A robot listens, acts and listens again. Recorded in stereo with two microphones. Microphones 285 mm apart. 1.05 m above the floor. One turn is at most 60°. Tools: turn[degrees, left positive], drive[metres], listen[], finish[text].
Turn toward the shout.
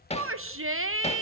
Thought: The shout: about 50° right or 130° right.
Action: turn[-50]
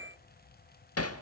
Thought: So it is at 80° right.
Action: turn[-60]
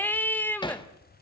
Action: finish[Found it: a shout, straight ahead.]